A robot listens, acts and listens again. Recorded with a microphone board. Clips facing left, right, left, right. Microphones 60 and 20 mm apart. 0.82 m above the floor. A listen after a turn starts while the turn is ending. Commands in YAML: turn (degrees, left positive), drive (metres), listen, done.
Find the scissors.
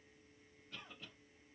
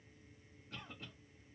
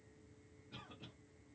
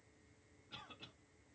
listen: true
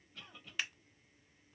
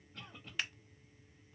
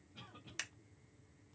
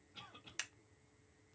turn: 30
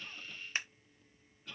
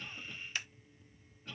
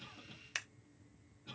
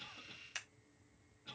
turn: 150
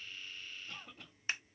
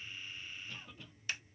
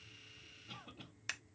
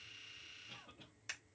turn: 30
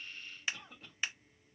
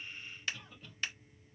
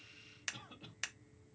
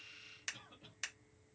turn: 15
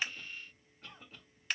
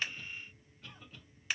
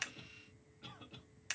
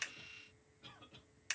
done: "Facing the scissors, under 1 m away."